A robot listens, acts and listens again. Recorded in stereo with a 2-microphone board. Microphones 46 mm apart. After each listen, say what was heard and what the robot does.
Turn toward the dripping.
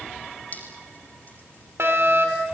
The dripping: about 35° left or 145° left. Turn 35° left.
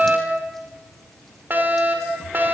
Keep listening.
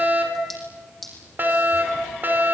Found it: dripping, straight ahead, over 4 m away.